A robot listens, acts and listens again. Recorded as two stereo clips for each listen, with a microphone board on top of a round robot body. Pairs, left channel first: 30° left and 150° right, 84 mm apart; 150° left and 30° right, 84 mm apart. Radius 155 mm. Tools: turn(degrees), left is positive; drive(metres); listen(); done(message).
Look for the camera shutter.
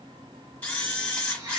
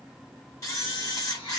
turn(degrees=100)
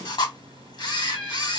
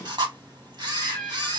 done("Facing the camera shutter.")